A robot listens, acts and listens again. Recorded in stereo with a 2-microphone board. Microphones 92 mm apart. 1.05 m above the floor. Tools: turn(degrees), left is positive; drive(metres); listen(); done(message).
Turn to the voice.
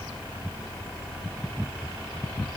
listen()
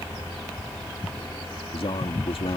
turn(degrees=70)
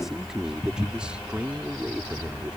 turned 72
turn(degrees=-15)
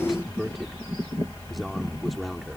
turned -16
done("Facing the man speaking.")